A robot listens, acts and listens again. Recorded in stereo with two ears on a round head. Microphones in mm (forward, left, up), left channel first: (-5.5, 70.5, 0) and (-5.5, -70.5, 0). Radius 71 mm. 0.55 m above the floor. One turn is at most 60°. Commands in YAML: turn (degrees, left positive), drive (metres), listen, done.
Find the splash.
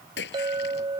turn: 60
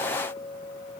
turn: 30
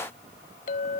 done: "Facing where the splash came from. I can't hear it now."